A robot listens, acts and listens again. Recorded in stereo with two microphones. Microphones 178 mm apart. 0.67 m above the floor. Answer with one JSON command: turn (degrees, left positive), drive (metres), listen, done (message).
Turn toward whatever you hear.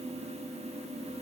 {"listen": true}
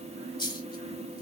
{"turn": 25}
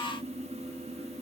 {"listen": true}
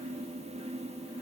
{"done": "I heard a dropped coin, but can't make it out now. It was about straight ahead or 130° left."}